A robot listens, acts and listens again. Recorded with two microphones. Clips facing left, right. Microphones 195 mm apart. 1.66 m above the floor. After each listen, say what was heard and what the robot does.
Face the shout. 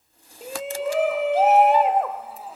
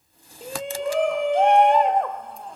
Turn 30° left.
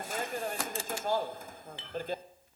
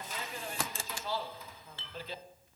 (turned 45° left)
So it is at 130° left. Turn 130° left.
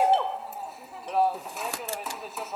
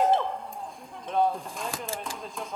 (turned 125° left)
Found it: a shout, straight ahead, under 1 m away.